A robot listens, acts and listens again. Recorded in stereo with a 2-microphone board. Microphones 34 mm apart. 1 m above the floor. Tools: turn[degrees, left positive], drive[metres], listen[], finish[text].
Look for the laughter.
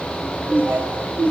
Action: turn[-90]
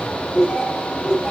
Thought: So it is at 20° right.
Action: turn[-20]
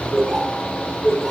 Thought: The laughter is now 10° right.
Action: turn[-10]
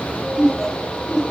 Action: finish[Found it: laughter, straight ahead, over 4 m away.]